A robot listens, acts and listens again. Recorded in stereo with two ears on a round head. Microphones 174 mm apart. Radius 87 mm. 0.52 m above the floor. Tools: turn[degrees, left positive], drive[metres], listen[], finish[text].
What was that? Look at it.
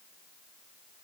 Action: listen[]
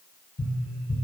Thought: The tapping: about 55° left or 125° left.
Action: turn[55]
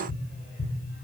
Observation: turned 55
Thought: So it is at 70° left.
Action: turn[70]
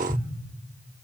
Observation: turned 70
Action: finish[Facing the tapping, 1 to 2 m away.]